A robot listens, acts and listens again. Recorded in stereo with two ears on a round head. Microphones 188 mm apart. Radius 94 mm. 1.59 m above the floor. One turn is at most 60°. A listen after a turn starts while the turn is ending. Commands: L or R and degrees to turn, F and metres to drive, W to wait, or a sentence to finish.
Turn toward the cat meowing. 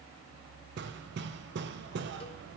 W
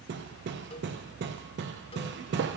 W
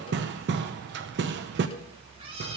R25
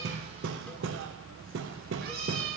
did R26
R60
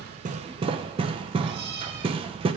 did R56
R60
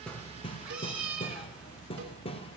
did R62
Found it: a cat meowing, straight ahead, 1 to 2 m away.